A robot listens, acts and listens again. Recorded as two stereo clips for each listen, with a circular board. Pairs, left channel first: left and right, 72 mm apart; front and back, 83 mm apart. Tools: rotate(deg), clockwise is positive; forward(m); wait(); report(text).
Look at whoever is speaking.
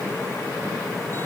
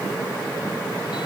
wait()
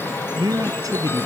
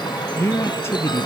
rotate(60)
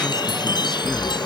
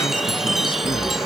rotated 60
wait()
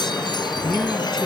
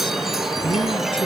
report("Facing the man speaking.")